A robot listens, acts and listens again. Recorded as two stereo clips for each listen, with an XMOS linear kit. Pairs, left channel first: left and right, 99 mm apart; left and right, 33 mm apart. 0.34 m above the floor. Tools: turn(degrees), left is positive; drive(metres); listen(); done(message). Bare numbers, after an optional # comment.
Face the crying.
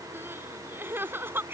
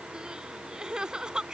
# The crying: about 25° right or 155° right.
turn(-25)
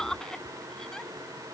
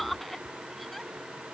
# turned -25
done("Facing the crying.")